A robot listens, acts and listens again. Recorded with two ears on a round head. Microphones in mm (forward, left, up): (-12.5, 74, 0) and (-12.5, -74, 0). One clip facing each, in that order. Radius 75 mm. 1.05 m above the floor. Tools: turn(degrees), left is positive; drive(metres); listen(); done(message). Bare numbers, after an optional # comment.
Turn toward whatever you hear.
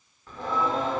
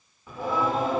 turn(-30)
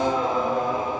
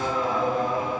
# So it is at 20° left.
turn(20)
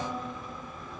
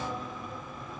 done("Facing the singing.")